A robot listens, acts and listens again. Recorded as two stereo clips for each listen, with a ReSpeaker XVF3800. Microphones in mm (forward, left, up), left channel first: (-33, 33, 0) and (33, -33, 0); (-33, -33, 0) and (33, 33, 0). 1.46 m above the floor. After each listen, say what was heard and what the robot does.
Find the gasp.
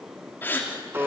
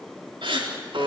The gasp: 65° left. Turn 65° left.
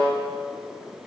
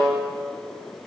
Facing where the gasp came from. I can't hear it now.